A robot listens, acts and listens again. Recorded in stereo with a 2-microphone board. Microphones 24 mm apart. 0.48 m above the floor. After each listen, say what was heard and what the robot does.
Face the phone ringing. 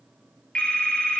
The phone ringing: about 75° left or 105° left. Turn 75° left.
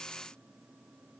Keep listening.
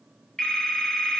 So it is at 30° left. Turn 30° left.
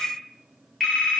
The phone ringing is now 10° left. Turn 10° left.
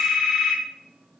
Found it: a phone ringing, straight ahead.